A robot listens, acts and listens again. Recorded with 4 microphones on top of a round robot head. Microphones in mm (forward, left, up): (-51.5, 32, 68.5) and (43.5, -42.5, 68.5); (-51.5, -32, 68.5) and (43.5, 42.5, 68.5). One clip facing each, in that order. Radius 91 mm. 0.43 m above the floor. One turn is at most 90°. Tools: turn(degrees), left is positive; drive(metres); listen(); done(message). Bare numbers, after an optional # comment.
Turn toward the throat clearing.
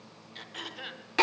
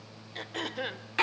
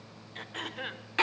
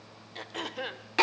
# The throat clearing: 15° right.
turn(-15)
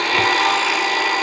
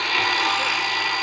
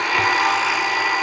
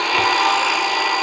listen()
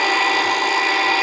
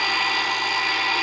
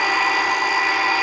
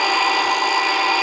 listen()
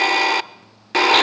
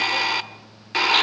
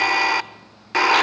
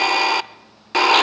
done("I heard throat clearing from this way, but can't make it out now.")